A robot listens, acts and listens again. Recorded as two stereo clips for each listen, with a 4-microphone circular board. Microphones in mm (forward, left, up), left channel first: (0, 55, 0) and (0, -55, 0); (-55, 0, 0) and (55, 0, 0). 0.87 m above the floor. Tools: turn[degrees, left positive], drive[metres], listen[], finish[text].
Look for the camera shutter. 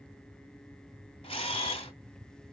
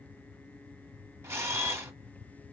Thought: The camera shutter: 70° left.
Action: turn[70]
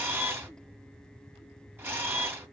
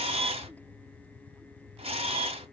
Thought: The camera shutter is now 20° right.
Action: turn[-20]
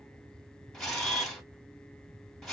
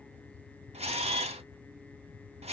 Action: finish[Facing the camera shutter.]